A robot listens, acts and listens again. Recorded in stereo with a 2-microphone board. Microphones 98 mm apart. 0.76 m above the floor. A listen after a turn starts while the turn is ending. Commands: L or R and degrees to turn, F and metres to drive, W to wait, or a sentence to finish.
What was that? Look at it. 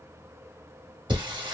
R55
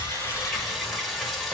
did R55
Found it: singing, straight ahead, under 1 m away.